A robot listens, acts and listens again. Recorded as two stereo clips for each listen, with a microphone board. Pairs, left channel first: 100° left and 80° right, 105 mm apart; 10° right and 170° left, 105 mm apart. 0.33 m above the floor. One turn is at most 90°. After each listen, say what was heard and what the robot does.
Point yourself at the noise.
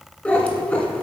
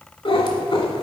The cat meowing: 25° left. Turn 25° left.
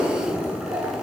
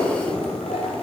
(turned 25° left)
Facing the cat meowing, 1 to 2 m away.